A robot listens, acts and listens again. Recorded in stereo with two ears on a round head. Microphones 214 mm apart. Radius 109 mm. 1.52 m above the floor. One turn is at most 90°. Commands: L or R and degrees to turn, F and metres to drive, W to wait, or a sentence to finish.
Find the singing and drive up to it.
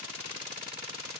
W
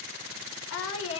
L65
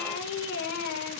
L50
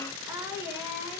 R10
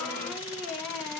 F1.0
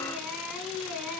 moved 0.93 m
F1.0
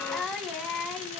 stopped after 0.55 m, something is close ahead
Something is in my way. I am facing the singing but have not reached it.